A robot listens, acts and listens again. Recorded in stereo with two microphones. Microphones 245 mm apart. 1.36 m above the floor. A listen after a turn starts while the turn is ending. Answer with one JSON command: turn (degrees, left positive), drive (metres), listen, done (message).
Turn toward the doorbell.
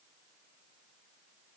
{"listen": true}
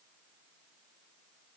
{"listen": true}
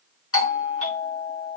{"turn": 65}
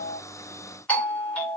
{"done": "Facing the doorbell, under 1 m away."}